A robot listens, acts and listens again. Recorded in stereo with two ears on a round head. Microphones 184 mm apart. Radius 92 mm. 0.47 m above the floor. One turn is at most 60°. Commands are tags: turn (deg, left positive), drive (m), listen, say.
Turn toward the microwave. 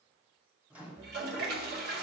<turn deg="-30"/>
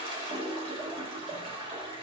<listen/>
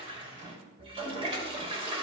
<turn deg="-60"/>
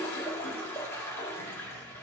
<turn deg="-60"/>
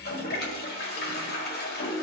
<turn deg="-20"/>
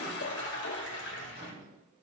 <turn deg="-30"/>
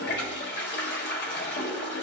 <listen/>
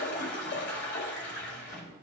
<say>Found it: a microwave, straight ahead, 2 to 4 m away.</say>